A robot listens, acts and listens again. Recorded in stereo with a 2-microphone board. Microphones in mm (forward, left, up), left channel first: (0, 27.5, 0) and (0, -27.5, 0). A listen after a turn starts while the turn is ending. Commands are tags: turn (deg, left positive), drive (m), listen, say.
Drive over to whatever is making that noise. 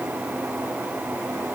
<listen/>
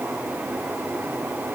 <listen/>
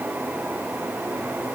<say>I can't make out anything.</say>